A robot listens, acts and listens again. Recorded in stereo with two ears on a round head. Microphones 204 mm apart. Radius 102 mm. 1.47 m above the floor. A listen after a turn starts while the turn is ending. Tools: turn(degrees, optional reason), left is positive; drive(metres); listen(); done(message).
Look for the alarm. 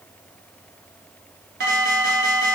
turn(degrees=-45, reason="The alarm: about 45° right or 135° right.")
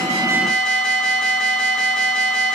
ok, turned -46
done("Facing the alarm.")